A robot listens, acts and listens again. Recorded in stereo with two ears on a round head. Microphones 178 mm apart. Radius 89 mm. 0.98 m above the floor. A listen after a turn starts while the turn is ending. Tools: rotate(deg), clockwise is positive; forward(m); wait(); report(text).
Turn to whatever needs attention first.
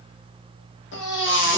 rotate(-65)
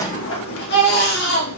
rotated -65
rotate(-50)
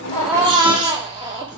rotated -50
rotate(25)
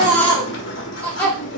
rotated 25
rotate(-10)
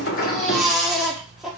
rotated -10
report("Found it: a baby crying, straight ahead, 1 to 2 m away.")